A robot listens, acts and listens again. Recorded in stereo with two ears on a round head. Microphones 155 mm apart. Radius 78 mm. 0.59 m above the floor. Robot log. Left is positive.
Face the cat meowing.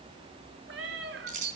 cmd yaw -90
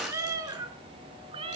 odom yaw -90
note: So it is at 35° right.
cmd yaw -35
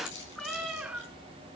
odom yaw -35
note: The cat meowing is now 10° right.
cmd yaw -10
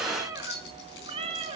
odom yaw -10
note: The cat meowing is now 35° right.
cmd yaw -35
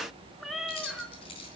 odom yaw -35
end: Found it: a cat meowing, straight ahead, 1 to 2 m away.